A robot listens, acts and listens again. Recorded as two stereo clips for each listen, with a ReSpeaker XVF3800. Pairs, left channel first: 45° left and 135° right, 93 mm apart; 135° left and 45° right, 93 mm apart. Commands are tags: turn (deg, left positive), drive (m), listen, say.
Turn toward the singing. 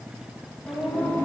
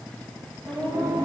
<turn deg="-25"/>
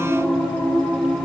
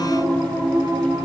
<turn deg="-30"/>
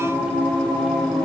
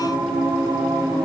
<turn deg="-30"/>
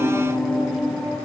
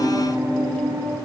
<turn deg="-45"/>
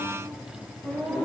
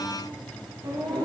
<turn deg="-30"/>
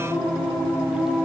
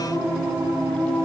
<say>Facing the singing.</say>